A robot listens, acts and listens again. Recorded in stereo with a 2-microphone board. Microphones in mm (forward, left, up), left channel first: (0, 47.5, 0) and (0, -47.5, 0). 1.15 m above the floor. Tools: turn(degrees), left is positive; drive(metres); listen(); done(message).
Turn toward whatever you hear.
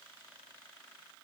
listen()
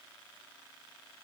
listen()
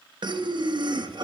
turn(degrees=-55)
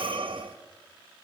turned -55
turn(degrees=-70)
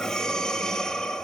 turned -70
done("Found it: breathing, straight ahead.")